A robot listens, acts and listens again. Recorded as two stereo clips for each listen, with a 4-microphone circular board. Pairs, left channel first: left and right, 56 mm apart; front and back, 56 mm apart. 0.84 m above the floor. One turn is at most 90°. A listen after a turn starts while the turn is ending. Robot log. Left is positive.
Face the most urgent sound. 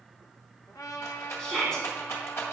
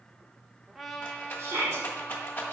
note: The shout: 170° left.
cmd yaw +90
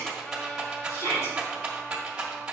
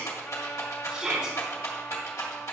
note: The shout is now 100° left.
cmd yaw +90
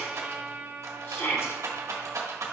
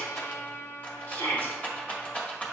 note: The shout is now 50° left.
cmd yaw +50
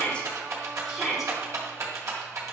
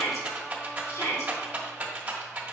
end: Facing the shout, 2 to 4 m away.